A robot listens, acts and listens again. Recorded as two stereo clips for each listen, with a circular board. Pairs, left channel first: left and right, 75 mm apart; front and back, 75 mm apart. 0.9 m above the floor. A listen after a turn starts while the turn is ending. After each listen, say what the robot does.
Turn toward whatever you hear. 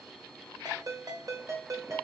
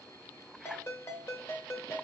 Turn 55° right.
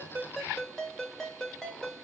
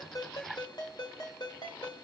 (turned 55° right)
Facing the ringtone, 1 to 2 m away.